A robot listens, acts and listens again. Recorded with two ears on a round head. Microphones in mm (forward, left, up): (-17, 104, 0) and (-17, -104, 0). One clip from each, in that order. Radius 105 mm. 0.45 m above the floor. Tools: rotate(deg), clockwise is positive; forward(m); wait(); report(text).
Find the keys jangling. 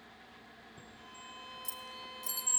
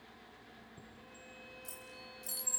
rotate(-25)
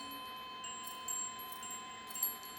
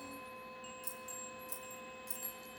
rotate(20)
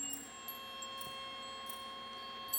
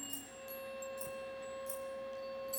wait()
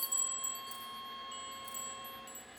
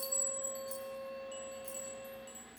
wait()
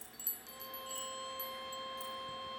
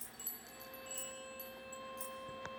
report("Found it: keys jangling, straight ahead.")